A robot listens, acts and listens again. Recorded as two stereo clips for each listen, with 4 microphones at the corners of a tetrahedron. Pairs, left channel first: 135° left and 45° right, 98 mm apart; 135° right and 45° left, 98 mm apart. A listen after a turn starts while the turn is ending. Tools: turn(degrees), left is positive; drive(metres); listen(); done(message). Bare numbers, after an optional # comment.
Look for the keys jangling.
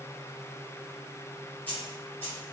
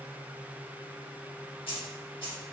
# The keys jangling: 160° right.
turn(-160)
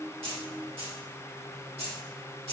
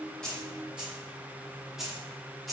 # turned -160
# The keys jangling is now 45° right.
turn(-45)
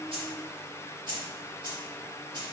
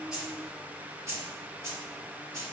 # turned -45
# The keys jangling is now 10° right.
turn(-10)
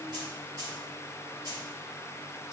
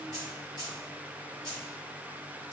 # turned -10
done("Found it: keys jangling, straight ahead.")